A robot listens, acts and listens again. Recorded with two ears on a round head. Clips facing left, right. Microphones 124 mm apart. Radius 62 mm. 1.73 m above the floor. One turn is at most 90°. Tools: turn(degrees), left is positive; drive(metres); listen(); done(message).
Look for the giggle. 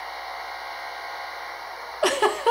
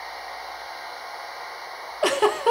turn(degrees=30)
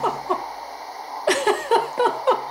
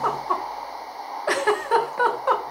turn(degrees=90)
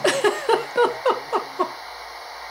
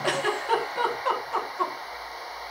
turn(degrees=60)
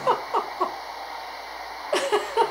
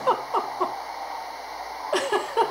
done("Facing the giggle, 1 to 2 m away.")